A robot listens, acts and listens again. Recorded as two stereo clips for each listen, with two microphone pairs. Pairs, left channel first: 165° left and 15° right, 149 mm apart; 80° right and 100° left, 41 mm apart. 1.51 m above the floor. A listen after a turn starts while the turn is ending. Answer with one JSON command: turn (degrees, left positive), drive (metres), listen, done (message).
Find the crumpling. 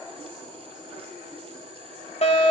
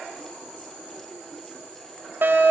{"listen": true}
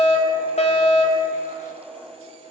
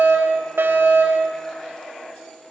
{"listen": true}
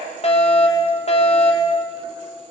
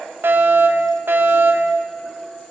{"done": "I can't make out crumpling, only a fire alarm."}